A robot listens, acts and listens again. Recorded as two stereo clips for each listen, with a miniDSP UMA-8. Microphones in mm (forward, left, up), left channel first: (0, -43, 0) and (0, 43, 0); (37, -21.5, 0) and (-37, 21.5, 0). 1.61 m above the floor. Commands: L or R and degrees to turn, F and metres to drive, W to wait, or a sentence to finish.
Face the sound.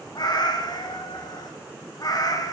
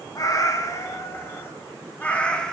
R110
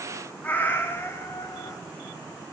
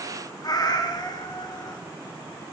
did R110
R40
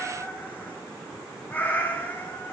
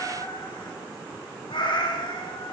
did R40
R25
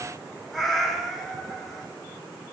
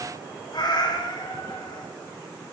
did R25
Found it: a cat meowing, straight ahead.